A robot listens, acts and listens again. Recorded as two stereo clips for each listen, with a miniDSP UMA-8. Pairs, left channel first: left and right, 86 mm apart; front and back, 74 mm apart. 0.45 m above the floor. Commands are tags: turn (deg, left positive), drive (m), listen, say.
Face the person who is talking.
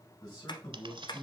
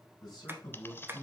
<turn deg="40"/>
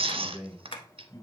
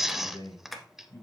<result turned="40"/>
<turn deg="10"/>
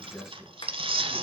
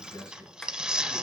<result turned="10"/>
<say>Found it: a man speaking, straight ahead, over 4 m away.</say>